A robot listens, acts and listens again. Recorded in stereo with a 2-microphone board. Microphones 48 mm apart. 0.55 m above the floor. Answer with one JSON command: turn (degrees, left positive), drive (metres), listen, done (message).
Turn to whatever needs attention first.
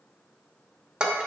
{"listen": true}
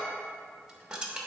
{"listen": true}
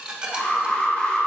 {"turn": 20}
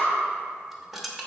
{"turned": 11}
{"turn": 150}
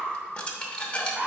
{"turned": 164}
{"turn": -15}
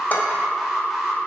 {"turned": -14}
{"done": "Found it: an alarm, straight ahead, 1 to 2 m away."}